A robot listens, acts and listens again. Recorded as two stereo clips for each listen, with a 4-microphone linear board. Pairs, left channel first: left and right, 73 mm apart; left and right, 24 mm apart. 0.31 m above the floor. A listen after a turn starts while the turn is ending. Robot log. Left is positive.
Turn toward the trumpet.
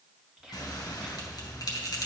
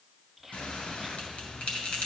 cmd idle
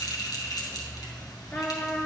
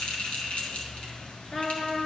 note: The trumpet: about 25° left or 155° left.
cmd yaw +25
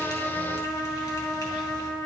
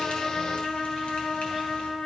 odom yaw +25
note: So it is at 130° left.
cmd yaw +130
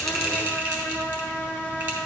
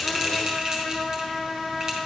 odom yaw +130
note: The trumpet is now 20° left.
cmd yaw +20
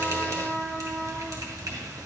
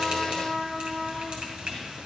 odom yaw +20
end: Facing the trumpet, 1 to 2 m away.